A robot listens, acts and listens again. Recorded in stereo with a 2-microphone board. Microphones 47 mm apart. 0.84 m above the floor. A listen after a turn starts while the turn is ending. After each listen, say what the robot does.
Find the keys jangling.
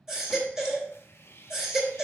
Keep listening.
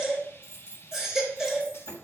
Turn 70° right.
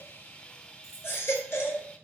Turn 10° right.
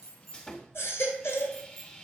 Found it: keys jangling, straight ahead, over 4 m away.